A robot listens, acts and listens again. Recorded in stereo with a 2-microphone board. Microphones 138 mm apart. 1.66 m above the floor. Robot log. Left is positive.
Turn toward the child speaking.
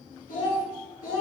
cmd yaw +90
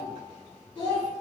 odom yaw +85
note: So it is at 10° left.
cmd yaw +10
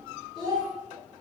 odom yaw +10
end: Found it: a child speaking, straight ahead.